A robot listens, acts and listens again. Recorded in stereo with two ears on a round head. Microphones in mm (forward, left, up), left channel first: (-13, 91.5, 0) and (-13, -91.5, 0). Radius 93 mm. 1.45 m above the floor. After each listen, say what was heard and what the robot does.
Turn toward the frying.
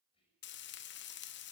The frying: about 60° left or 120° left. Turn 60° left.
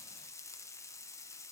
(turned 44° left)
So it is at 15° left. Turn 15° left.
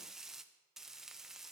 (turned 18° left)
Found it: frying, straight ahead.